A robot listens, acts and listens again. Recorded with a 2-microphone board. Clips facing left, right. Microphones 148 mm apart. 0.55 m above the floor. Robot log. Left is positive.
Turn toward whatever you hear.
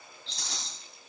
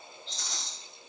cmd yaw +90
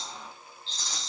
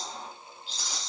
note: So it is at 10° right.
cmd yaw -10
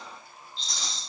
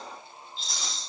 end: Facing the rattle, 2 to 4 m away.